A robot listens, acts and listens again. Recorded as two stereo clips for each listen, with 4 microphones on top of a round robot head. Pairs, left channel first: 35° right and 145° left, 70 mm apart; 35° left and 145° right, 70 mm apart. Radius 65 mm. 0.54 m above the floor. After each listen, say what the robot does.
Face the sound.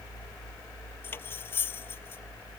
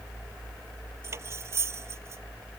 Turn 95° right.
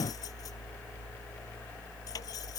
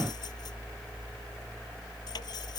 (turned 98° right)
Keep listening.
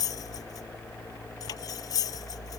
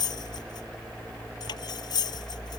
Found it: cutlery clinking, straight ahead.